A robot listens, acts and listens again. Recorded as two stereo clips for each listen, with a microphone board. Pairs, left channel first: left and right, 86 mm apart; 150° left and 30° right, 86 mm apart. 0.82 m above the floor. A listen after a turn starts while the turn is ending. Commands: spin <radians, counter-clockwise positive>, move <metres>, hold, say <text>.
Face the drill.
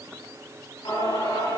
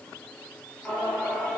hold
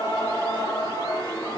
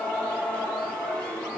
hold
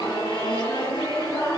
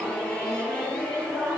say I can't make out a drill to turn to.